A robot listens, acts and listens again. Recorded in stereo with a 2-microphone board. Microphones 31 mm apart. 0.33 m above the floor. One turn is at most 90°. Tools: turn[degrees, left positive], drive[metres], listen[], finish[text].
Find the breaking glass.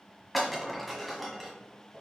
Action: turn[30]
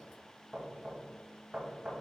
Action: listen[]
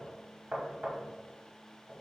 Action: finish[I heard breaking glass, but can't make it out now. It was about 25° right or 145° left.]